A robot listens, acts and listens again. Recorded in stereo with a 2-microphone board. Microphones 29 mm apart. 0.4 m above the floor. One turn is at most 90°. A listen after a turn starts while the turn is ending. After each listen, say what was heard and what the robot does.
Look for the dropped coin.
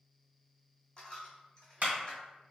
The dropped coin: about 30° left or 150° left. Turn 30° left.
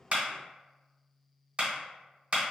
Keep listening.
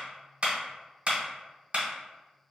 I heard a dropped coin, but can't make it out now. It was about straight ahead or 120° left.